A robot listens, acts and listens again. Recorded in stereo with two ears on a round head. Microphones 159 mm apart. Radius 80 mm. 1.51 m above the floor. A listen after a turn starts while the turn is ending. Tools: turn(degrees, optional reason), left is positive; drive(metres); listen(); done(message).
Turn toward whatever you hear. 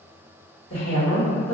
turn(degrees=40, reason="The woman speaking: about 40° left or 140° left.")
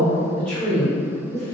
turn(degrees=15, reason="So it is at 15° left.")
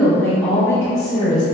turn(degrees=25, reason="The woman speaking is now 25° left.")
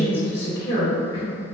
turn(degrees=25, reason="The woman speaking is now 25° left.")
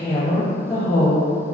turn(degrees=30, reason="The woman speaking is now 30° left.")
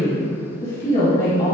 turn(degrees=25, reason="The woman speaking is now 25° left.")
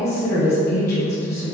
turn(degrees=15, reason="The woman speaking is now 15° left.")
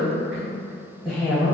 done("Facing the woman speaking.")